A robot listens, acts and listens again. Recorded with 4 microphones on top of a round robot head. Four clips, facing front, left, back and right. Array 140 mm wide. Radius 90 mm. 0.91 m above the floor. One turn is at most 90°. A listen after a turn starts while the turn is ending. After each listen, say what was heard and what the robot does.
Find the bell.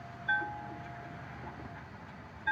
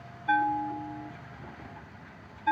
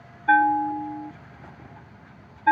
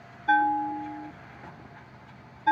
The bell: 165° right. Turn 90° right.
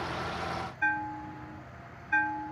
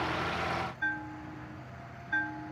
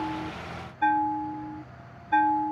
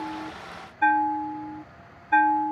The bell is now 125° right. Turn 90° right.
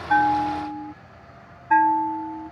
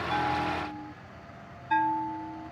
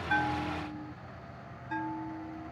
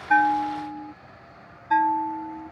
The bell is now 20° right. Turn 20° right.
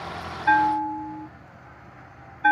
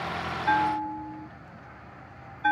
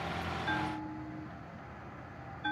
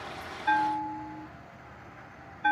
Facing the bell.